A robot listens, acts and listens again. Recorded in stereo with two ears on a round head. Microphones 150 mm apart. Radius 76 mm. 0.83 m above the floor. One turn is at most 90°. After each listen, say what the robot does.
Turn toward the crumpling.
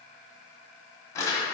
Turn 20° left.
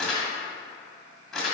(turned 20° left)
Facing the crumpling.